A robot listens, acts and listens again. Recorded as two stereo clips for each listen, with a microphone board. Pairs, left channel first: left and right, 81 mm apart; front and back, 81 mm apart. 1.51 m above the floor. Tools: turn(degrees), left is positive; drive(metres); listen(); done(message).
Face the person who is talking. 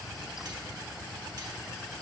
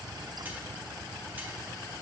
listen()
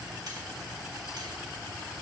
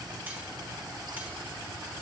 listen()
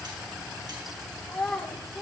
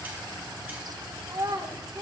turn(degrees=175)
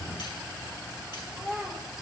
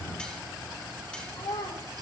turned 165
turn(degrees=-10)
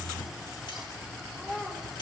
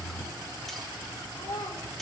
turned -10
done("Facing the child speaking, 2 to 4 m away.")